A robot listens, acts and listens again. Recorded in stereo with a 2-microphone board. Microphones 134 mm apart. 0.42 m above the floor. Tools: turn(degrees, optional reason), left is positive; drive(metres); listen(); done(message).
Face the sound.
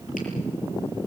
listen()
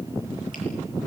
listen()
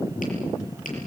done("I can't make out anything to turn to.")